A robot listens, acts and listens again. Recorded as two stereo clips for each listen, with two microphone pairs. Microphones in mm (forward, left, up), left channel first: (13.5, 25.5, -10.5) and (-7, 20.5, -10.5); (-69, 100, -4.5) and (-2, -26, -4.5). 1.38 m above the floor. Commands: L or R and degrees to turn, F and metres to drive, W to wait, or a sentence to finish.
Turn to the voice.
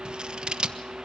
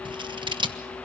W
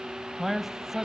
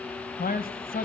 L110
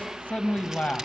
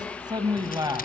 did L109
Facing the man speaking.